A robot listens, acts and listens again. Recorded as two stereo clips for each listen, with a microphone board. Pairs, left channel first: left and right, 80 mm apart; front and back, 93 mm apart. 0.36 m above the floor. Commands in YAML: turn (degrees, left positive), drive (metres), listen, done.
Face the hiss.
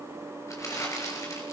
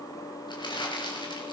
listen: true
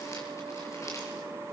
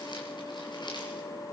listen: true
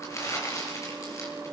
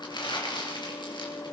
done: "I can't make out a hiss, only crumpling."